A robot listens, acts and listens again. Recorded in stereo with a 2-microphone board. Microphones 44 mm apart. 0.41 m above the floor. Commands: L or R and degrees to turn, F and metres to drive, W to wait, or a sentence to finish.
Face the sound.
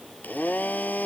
L40
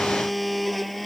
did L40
Facing the blender.